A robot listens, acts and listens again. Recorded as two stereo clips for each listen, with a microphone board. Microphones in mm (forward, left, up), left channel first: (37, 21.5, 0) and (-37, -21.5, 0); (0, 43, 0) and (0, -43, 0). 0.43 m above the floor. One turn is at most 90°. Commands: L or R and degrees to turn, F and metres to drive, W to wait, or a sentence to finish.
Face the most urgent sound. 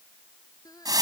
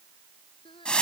L75
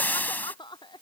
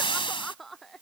Facing the crying.